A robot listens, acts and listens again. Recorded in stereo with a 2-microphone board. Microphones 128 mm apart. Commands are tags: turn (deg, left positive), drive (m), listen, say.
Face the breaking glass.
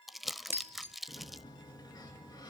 <turn deg="-20"/>
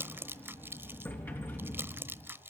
<listen/>
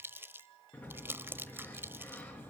<say>I heard breaking glass, but can't make it out now. It was about straight ahead or 140° right.</say>